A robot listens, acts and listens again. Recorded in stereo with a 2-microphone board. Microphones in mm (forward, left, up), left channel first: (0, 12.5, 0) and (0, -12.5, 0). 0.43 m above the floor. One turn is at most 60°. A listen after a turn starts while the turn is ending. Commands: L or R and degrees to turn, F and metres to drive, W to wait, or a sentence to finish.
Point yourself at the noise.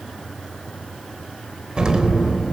R35
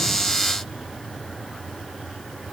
W
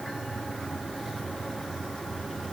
I heard an explosion, but can't make it out now. It was about straight ahead or 110° right.